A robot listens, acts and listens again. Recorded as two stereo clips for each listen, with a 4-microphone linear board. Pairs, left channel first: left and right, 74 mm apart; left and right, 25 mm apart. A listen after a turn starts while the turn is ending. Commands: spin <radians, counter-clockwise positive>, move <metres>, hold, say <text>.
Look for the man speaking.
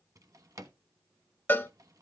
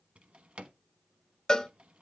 hold
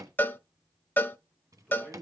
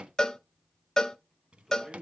spin -0.52
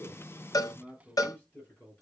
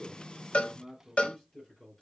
spin 0.35
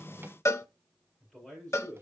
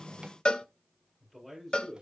say Facing the man speaking.